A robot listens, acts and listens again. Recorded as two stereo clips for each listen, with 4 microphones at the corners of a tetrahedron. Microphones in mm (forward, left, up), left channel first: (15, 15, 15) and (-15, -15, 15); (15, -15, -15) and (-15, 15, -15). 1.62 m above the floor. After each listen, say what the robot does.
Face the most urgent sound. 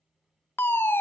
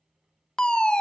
Turn 25° left.
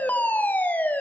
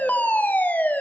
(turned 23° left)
Facing the fire alarm.